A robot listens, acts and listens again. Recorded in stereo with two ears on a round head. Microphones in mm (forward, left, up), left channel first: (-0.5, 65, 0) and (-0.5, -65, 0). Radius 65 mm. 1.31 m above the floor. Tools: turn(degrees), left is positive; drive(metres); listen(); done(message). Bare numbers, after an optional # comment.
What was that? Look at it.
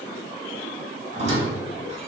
# The squeak: about 50° right or 130° right.
turn(-50)
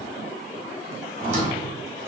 # So it is at 65° right.
turn(-65)
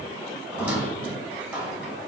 # The squeak is now 10° right.
turn(-10)
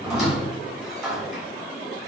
done("Found it: a squeak, straight ahead.")